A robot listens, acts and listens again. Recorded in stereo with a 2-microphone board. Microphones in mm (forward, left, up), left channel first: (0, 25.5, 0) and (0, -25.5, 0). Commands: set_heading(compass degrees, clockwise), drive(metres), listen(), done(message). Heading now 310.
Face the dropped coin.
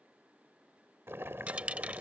set_heading(340)
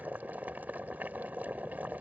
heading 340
listen()
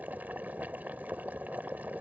done("I heard a dropped coin, but can't make it out now. It was about straight ahead or 120° right.")